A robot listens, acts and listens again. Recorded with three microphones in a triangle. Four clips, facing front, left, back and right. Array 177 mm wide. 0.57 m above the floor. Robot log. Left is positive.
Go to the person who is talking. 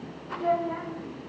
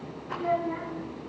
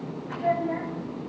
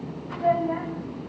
note: The child speaking: 110° right.
cmd yaw -110
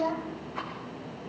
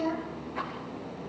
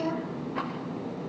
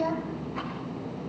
note: The child speaking is now 30° right.
cmd yaw -30
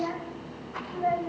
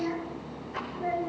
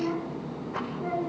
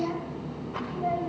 note: The child speaking is now 15° right.
cmd yaw -15
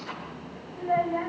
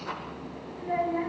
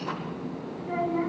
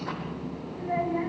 cmd fwd 1.0
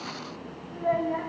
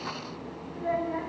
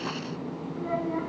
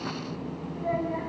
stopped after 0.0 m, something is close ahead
end: Something is in my way. I am facing the child speaking but have not reached it.